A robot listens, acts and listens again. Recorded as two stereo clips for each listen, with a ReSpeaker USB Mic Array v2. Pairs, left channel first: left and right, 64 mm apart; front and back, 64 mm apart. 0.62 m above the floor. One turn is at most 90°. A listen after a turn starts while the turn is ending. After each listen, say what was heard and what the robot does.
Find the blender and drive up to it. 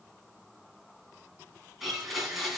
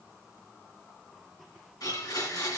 Drive 1.0 m forward.
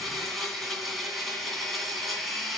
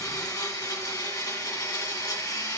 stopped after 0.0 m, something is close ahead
Blocked. The blender is further on, straight ahead.